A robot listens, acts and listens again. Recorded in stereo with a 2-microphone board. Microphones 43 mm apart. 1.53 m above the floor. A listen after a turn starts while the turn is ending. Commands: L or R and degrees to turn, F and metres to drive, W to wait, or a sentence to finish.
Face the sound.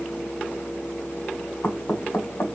L75
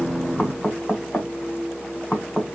L30
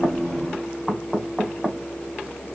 Facing the knocking.